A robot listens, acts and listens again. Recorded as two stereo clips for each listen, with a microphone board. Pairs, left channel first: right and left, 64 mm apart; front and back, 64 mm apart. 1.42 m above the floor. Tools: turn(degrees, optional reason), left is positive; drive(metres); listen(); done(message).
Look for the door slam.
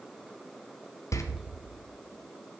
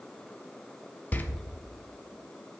turn(degrees=-60, reason="The door slam: 60° right.")
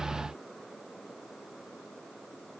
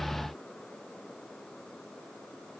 done("I heard a door slam from this way, but can't make it out now.")